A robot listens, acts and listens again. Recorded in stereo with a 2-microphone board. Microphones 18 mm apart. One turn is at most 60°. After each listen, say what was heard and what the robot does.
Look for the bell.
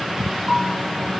The bell: about 65° right or 115° right. Turn 60° right.
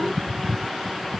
Keep listening.
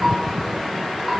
Keep listening.
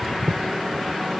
I heard a bell, but can't make it out now. It was about 5° right or 55° right.